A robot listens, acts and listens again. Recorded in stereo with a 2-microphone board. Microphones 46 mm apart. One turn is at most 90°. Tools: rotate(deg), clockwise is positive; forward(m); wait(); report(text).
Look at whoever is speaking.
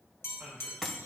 rotate(35)
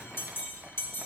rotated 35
wait()
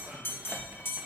wait()
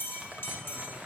report("I heard a man speaking, but can't make it out now. It was about straight ahead or 110° right.")